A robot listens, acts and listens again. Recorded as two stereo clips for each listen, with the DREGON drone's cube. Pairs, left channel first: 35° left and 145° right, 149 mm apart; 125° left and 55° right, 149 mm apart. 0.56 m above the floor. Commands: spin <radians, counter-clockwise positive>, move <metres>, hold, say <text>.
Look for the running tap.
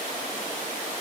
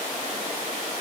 hold
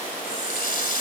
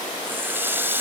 spin 0.35
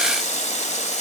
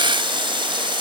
say Facing the running tap.